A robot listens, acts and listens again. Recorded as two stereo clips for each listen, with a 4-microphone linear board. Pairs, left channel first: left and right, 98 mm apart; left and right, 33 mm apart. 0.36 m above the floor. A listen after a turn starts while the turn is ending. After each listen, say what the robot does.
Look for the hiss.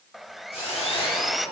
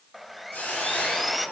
Turn 90° left.
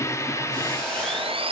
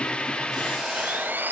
Facing the hiss, over 4 m away.